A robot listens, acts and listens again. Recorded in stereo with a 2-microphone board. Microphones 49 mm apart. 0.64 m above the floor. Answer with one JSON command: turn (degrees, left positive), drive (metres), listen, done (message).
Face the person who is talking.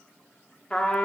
{"listen": true}
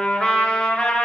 {"listen": true}
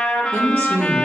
{"turn": -60}
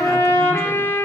{"listen": true}
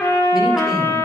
{"listen": true}
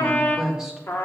{"turn": -15}
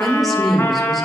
{"done": "Found it: a woman speaking, straight ahead."}